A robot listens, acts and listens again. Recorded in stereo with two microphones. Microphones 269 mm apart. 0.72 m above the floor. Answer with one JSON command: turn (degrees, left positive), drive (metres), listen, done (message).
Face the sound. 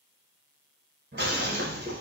{"turn": -45}
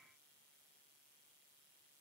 {"listen": true}
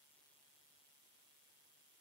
{"done": "I heard breaking glass, but can't make it out now. It was about straight ahead or 90° right."}